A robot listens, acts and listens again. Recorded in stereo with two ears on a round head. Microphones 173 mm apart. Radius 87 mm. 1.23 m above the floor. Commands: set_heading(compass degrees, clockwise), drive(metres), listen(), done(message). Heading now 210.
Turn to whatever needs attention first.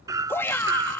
set_heading(180)
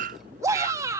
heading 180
set_heading(195)
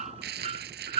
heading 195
listen()
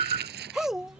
done("Facing the shout.")